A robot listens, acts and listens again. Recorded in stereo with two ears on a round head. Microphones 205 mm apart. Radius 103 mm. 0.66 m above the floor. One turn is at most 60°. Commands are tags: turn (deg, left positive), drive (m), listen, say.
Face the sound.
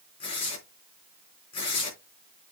<turn deg="25"/>
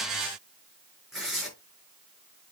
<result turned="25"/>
<say>Facing the tearing paper.</say>